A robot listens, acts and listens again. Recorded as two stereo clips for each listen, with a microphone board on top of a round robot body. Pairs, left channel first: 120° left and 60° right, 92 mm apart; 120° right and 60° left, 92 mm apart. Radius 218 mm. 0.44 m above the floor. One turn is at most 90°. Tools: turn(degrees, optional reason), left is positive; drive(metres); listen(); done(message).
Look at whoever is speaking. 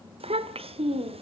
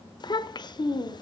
turn(degrees=-75, reason="The child speaking: 75° right.")
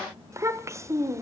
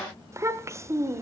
done("Found it: a child speaking, straight ahead.")